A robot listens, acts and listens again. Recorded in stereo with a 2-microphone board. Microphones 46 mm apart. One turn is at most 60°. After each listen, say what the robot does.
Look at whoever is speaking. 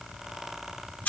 Keep listening.
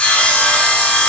Keep listening.
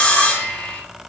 I can't make out anyone speaking to turn to.